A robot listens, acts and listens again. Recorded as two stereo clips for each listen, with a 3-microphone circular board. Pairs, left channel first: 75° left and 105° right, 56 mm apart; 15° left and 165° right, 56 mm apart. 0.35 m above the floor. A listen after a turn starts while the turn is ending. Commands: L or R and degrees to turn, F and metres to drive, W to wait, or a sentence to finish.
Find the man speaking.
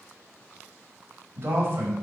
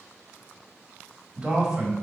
R90
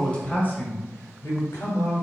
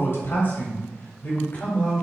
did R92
L70
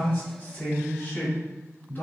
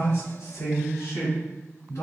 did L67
L20
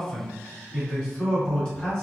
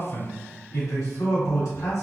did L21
Found it: a man speaking, straight ahead.